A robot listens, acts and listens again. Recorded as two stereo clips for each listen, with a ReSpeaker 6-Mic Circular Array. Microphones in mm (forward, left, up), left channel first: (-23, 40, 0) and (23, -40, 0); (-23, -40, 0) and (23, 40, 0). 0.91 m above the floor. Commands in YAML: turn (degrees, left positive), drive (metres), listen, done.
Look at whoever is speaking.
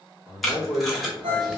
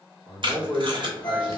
turn: -105
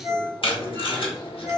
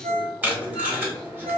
done: "Facing the man speaking, 1 to 2 m away."